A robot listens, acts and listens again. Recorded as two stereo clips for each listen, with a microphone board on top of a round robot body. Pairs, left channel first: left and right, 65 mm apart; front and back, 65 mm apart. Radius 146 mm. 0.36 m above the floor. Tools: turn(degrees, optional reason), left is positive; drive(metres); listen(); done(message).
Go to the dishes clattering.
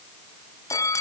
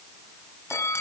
listen()
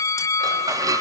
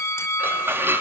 turn(degrees=-120, reason="The dishes clattering: 120° right.")
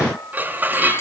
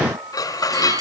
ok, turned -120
turn(degrees=-25, reason="The dishes clattering is now 25° right.")
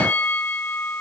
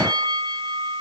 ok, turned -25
listen()
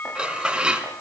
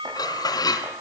turn(degrees=-10, reason="The dishes clattering is now 10° right.")
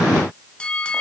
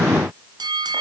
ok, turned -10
listen()
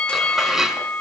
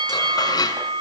drive(metres=1.0)
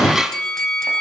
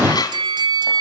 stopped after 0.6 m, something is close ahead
done("Blocked. The dishes clattering is further on, straight ahead.")